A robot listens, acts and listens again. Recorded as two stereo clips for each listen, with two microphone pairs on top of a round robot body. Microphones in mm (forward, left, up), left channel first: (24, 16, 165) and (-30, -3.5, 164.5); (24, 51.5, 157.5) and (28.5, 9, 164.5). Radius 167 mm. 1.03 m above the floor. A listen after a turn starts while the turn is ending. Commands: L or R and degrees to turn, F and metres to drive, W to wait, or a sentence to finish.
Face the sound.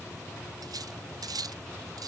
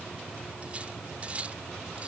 R150
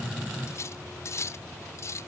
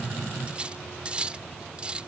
R25
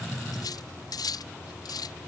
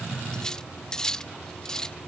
L15
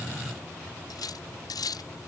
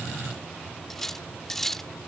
L10
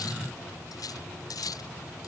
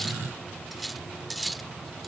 Facing the cutlery clinking.